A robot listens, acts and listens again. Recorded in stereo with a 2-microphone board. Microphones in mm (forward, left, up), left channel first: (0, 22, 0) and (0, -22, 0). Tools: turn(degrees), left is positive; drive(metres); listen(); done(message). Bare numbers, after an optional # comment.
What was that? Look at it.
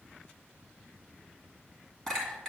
turn(30)
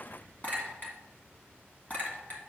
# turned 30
# So it is at 140° left.
turn(140)
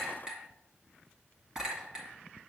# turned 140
# The clink is now 15° right.
turn(-15)
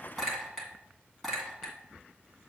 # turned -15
done("Found it: a clink, straight ahead.")